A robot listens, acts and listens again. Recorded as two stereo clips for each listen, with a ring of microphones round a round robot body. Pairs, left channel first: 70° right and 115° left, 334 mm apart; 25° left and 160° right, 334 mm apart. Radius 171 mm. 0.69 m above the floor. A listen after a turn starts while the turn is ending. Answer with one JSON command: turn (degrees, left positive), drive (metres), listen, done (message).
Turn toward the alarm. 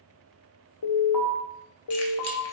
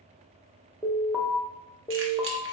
{"turn": -70}
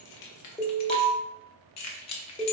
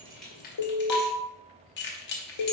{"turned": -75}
{"done": "Found it: an alarm, straight ahead."}